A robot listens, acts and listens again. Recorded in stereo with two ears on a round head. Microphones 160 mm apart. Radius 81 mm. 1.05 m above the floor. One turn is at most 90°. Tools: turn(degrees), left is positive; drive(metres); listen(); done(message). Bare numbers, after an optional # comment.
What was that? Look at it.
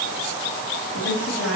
turn(90)
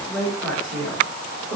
done("Found it: a woman speaking, straight ahead.")